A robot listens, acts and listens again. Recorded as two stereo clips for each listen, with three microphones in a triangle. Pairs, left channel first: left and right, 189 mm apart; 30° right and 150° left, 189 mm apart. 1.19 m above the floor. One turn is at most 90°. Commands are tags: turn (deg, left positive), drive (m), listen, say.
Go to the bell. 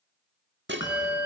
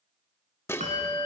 <turn deg="90"/>
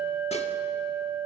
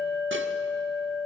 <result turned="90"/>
<drive m="1.0"/>
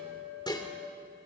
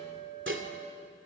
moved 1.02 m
<turn deg="-10"/>
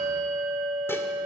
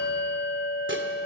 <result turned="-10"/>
<drive m="1.0"/>
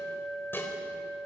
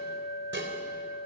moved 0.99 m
<drive m="1.0"/>
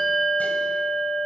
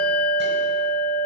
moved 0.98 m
<drive m="1.0"/>
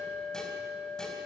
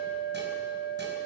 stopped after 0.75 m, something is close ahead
<say>Arrived at the bell, straight ahead.</say>